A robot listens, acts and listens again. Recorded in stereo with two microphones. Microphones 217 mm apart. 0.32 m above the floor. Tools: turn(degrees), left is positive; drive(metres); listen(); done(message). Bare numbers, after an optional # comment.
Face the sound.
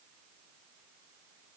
listen()
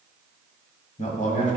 # The man speaking: about 35° left or 145° left.
turn(35)
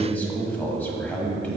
# So it is at 10° left.
turn(10)
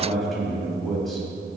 done("Found it: a man speaking, straight ahead.")